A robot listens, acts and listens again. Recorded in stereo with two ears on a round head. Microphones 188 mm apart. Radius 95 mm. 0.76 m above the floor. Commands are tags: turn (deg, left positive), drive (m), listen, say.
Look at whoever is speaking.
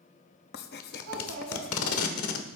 <turn deg="-90"/>
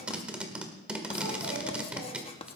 <listen/>
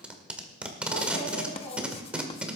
<say>Facing the child speaking.</say>